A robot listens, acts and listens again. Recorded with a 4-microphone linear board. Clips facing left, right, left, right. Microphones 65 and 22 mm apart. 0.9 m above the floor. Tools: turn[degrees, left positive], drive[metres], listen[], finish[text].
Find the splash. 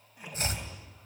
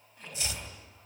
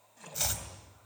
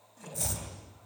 Action: turn[30]
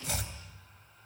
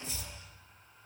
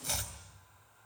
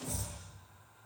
Action: listen[]
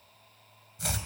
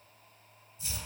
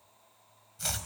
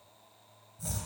Action: finish[I heard a splash, but can't make it out now. It was about 20° right or 140° left.]